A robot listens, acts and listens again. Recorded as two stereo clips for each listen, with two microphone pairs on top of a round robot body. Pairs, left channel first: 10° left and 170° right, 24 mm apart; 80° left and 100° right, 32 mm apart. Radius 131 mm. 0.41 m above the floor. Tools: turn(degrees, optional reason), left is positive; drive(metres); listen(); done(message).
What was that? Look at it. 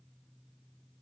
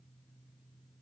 listen()
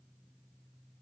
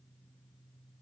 listen()
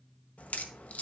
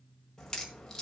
done("Found it: a crack, straight ahead, 1 to 2 m away.")